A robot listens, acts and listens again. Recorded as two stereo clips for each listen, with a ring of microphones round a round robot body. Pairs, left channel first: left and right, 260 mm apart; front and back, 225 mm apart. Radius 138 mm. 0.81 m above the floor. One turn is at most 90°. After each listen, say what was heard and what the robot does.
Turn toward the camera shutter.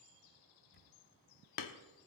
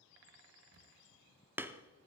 The camera shutter: 145° left. Turn 90° left.
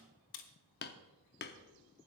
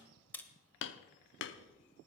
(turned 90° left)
The camera shutter is now 85° left. Turn 85° left.
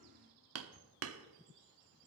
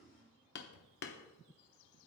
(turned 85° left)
Keep listening.
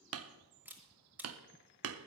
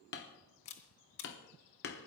Found it: a camera shutter, straight ahead.